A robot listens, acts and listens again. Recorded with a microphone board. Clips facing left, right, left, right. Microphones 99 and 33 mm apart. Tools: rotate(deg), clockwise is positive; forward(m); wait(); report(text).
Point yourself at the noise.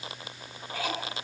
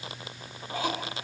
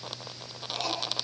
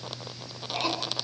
rotate(20)
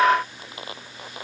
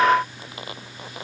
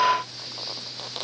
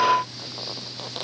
wait()
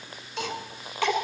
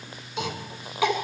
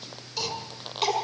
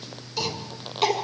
report("Facing the cough.")